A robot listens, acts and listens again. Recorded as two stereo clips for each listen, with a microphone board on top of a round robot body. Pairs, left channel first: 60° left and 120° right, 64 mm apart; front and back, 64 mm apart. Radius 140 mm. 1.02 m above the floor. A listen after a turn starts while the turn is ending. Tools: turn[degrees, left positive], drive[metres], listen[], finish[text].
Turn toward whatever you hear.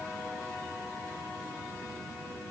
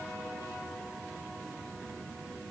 Action: listen[]
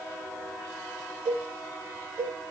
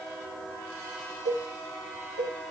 Thought: The cowbell: 80° right.
Action: turn[-80]
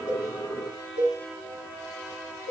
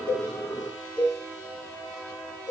Action: finish[Found it: a cowbell, straight ahead.]